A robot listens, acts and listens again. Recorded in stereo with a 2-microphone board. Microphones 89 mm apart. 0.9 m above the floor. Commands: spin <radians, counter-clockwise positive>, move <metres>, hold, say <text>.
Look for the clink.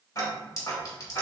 spin 0.79
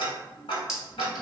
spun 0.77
say Found it: a clink, straight ahead.